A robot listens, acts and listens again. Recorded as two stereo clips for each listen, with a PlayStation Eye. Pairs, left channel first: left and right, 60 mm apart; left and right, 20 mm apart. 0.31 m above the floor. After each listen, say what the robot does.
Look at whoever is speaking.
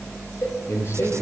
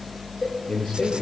Turn 45° left.
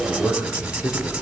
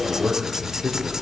Turn 90° left.
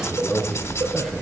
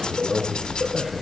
Facing the man speaking, over 4 m away.